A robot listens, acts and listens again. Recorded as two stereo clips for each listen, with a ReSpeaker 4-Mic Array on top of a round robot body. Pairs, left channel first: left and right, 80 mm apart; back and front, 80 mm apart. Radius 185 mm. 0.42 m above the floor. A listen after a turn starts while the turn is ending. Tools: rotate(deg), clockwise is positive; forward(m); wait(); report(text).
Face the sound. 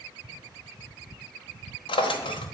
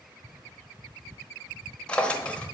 rotate(-105)
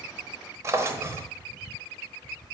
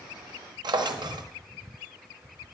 rotate(30)
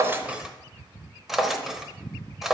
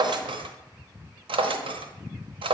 report("Facing the drawer, under 1 m away.")